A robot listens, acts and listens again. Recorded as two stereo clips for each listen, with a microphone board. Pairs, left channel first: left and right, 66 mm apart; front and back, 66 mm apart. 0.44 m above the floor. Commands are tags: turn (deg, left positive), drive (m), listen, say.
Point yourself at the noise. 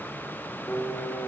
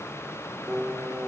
<turn deg="115"/>
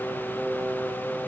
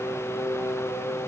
<turn deg="30"/>
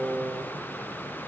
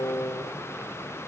<turn deg="-20"/>
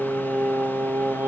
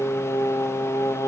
<turn deg="-30"/>
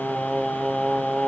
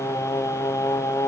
<say>Facing the singing.</say>